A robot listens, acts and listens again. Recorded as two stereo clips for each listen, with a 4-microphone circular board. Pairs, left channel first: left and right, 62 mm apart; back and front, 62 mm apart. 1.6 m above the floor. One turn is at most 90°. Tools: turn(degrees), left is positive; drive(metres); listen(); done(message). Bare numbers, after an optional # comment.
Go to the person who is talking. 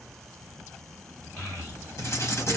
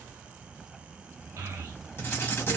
# The child speaking: 25° left.
turn(25)
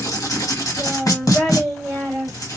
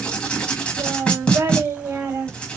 drive(1.0)
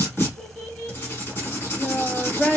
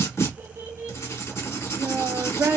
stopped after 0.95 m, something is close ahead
# The child speaking is now 15° left.
turn(15)
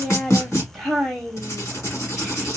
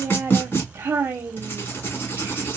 done("I am next to the child speaking.")